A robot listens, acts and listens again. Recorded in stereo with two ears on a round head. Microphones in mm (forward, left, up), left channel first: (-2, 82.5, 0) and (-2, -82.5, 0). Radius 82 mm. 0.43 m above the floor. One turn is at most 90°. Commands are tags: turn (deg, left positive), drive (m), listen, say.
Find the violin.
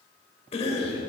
<listen/>
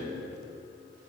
<listen/>
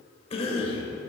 <say>I can't make out a violin, only a cough.</say>